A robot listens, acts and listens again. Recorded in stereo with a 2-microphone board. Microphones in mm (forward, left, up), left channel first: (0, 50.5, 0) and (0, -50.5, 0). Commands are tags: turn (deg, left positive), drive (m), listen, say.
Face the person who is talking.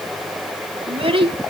<turn deg="-70"/>
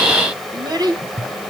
<turn deg="-45"/>
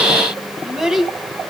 <say>Found it: a child speaking, straight ahead, 2 to 4 m away.</say>